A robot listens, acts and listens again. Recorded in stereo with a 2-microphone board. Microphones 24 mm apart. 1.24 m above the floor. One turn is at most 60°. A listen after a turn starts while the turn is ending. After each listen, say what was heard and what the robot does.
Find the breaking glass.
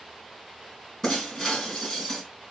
The breaking glass: about 20° left or 160° left. Turn 20° left.
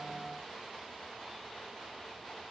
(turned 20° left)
Keep listening.
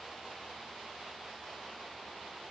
I heard breaking glass, but can't make it out now. It was about straight ahead or 140° left.